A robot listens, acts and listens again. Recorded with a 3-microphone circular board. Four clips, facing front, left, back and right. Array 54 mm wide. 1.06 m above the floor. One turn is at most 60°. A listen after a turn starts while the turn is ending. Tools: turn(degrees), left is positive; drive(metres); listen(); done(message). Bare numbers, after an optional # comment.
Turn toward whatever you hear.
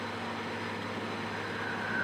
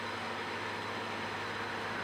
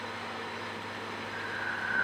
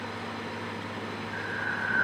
# The breathing: 110° right.
turn(-60)
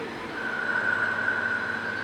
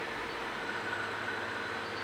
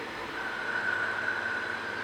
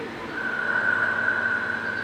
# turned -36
# The breathing is now 70° right.
turn(-60)
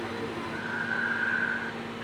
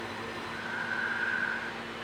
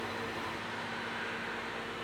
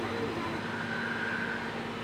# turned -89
# The breathing is now 20° left.
turn(20)
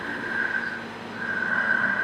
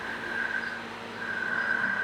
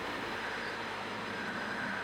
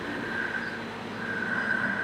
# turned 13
done("Found it: breathing, straight ahead.")